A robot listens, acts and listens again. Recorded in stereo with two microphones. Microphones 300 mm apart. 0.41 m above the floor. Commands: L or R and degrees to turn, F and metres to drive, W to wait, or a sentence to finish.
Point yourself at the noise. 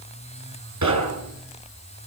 R90
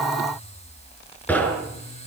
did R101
Facing the knocking.